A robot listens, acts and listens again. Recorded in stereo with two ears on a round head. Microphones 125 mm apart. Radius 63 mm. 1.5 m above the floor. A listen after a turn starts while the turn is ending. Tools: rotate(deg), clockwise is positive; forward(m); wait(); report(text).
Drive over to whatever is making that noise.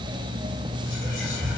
rotate(-75)
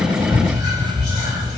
forward(1.0)
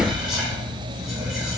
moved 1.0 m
forward(1.0)
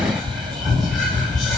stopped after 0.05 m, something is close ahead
report("I am next to the whispering.")